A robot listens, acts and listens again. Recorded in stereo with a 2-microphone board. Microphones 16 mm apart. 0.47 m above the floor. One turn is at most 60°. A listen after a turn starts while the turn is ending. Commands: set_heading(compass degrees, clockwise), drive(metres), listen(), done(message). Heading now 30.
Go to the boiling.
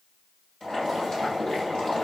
set_heading(330)
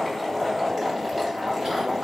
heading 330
set_heading(320)
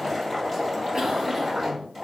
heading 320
drive(1.0)
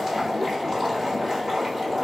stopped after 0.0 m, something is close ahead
set_heading(330)
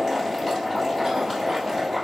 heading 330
done("Blocked. The boiling is further on, straight ahead.")